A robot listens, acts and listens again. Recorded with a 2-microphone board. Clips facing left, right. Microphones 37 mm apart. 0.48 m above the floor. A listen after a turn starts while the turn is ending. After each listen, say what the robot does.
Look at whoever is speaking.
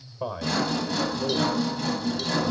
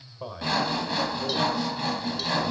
Turn 30° left.
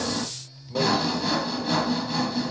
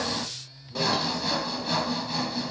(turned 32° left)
Turn 135° left.
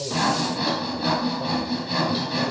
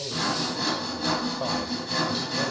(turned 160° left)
Turn 25° right.
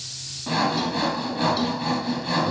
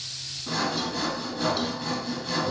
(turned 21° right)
Keep listening.
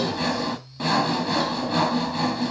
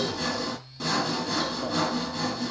Facing where the man speaking came from. I can't hear it now.